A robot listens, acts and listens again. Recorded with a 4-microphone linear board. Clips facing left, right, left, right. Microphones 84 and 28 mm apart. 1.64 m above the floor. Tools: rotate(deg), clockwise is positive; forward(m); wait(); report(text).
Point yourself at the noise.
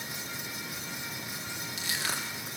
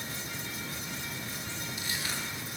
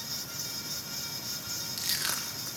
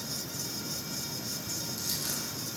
rotate(-90)
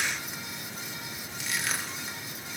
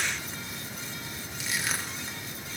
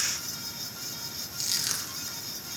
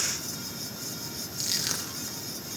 report("Found it: crushing, straight ahead, 1 to 2 m away.")